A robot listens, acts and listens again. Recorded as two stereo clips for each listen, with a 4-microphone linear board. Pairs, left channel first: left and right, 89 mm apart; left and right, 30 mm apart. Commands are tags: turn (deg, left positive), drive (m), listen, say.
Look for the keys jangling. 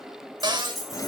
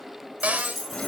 <turn deg="30"/>
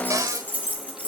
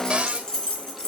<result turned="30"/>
<turn deg="160"/>
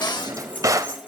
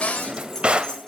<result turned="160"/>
<turn deg="20"/>
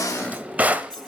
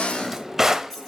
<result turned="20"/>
<listen/>
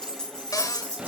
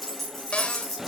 <turn deg="10"/>
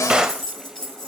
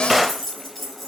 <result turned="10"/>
<say>Facing the keys jangling.</say>